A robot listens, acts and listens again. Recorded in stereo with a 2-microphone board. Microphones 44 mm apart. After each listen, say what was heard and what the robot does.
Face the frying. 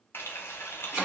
The frying: about 55° left or 125° left. Turn 55° left.
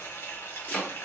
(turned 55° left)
So it is at 70° left. Turn 70° left.
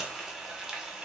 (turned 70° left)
Facing the frying, 1 to 2 m away.